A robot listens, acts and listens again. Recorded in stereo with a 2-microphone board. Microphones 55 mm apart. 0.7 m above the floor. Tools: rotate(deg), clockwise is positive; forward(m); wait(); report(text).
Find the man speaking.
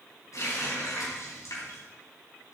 wait()
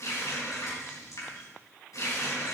wait()
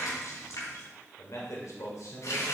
rotate(-75)
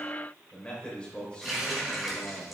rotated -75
rotate(-20)
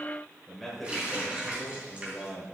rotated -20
report("Facing the man speaking.")